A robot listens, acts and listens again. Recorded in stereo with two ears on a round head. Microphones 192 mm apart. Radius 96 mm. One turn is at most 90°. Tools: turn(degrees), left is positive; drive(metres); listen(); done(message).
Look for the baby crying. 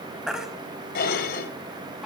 turn(degrees=-30)
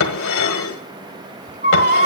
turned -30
turn(degrees=-90)
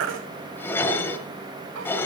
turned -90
turn(degrees=-60)
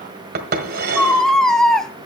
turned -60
done("Facing the baby crying, under 1 m away.")